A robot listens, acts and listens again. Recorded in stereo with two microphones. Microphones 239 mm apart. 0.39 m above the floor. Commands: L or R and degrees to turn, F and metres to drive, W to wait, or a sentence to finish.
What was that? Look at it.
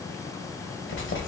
L55
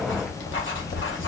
L65
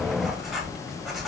Facing the writing.